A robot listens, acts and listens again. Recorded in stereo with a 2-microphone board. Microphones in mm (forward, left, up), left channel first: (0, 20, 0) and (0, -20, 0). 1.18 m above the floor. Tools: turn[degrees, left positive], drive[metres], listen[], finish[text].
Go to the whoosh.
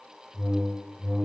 Thought: The whoosh: about 20° right or 160° right.
Action: turn[-20]
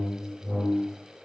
Action: drive[1.0]
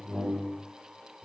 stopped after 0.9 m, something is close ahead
Action: finish[I am next to the whoosh.]